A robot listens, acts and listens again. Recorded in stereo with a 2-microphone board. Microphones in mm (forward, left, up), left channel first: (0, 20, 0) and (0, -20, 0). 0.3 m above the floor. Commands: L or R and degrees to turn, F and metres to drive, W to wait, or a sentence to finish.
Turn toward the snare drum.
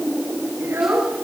W
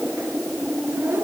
W
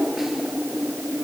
I can't make out a snare drum, only a child speaking.